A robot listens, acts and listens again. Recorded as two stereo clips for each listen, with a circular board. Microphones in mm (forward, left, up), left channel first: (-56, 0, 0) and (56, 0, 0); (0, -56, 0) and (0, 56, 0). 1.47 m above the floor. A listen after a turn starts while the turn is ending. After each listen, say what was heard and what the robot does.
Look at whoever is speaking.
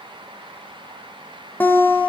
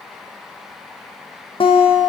Keep listening.
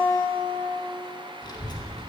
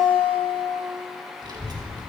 The child speaking: 135° left. Turn 135° left.
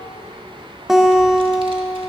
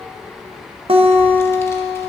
The child speaking is now 25° right. Turn 25° right.
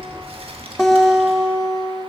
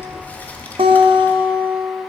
The child speaking is now 20° right. Turn 20° right.
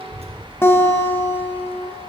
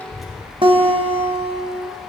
Facing the child speaking, 1 to 2 m away.